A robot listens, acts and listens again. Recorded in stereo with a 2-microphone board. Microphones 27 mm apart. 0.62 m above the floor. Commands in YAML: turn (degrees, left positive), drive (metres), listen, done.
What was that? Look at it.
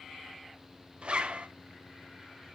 turn: -40
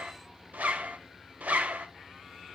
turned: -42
turn: -95
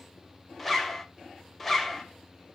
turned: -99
done: "Facing the zipper."